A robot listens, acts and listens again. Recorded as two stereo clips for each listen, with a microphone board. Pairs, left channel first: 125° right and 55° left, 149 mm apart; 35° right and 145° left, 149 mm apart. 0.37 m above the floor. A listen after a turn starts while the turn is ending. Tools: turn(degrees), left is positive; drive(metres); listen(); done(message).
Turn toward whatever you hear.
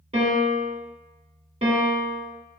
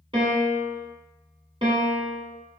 turn(degrees=95)
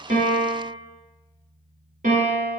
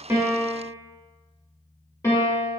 turn(degrees=35)
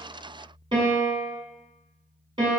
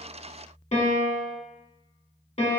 done("Found it: a piano, straight ahead, 1 to 2 m away.")